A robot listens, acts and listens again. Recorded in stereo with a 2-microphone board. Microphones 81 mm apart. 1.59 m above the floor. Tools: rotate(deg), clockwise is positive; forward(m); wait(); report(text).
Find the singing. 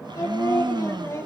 rotate(-35)
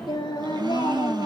rotate(-115)
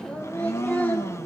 rotate(-20)
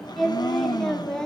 rotate(-10)
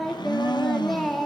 report("Facing the singing.")